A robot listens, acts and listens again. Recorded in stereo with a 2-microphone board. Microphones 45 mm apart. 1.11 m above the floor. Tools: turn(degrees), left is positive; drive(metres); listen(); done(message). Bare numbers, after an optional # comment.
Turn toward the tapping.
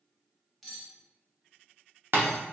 # The tapping: about 50° right or 130° right.
turn(-50)
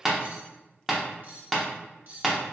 done("Found it: tapping, straight ahead.")